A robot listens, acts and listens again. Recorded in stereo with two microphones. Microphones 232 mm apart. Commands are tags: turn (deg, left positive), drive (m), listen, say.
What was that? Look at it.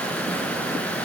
<listen/>
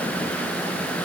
<listen/>
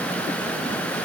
<say>I can't make out anything.</say>